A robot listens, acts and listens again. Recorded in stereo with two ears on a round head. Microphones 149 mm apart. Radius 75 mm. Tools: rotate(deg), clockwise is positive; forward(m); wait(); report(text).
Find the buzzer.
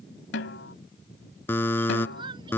rotate(-30)
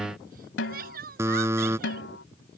rotate(15)
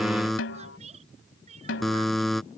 report("Facing the buzzer.")